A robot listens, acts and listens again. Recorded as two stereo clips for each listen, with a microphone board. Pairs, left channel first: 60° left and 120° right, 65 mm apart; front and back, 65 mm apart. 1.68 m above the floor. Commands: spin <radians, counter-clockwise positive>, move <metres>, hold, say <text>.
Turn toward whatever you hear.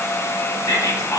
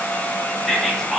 spin 1.57
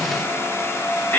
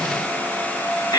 say Found it: whispering, straight ahead, under 1 m away.